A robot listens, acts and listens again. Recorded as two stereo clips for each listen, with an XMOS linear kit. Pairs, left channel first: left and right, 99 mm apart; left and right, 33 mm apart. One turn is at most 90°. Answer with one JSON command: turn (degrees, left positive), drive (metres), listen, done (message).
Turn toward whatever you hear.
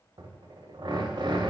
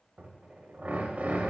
{"turn": -55}
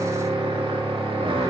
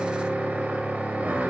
{"turn": -75}
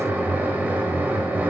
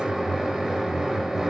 {"turn": -20}
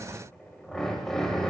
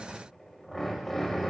{"done": "Facing the drill, under 1 m away."}